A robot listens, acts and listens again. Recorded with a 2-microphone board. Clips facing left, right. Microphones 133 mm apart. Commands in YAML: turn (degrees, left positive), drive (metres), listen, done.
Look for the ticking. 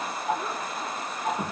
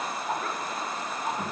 turn: 90
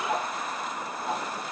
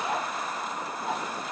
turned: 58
turn: 35
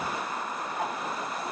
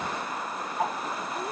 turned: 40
done: "Found it: ticking, straight ahead."